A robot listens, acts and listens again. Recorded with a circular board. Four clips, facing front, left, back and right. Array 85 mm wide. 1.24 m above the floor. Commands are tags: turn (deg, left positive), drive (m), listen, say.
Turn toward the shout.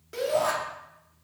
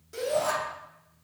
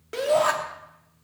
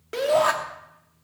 <turn deg="-115"/>
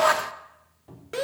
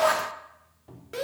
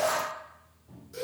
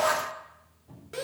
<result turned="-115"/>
<turn deg="10"/>
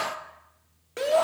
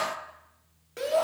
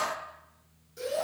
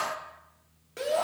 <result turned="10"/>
<say>Found it: a shout, straight ahead, 2 to 4 m away.</say>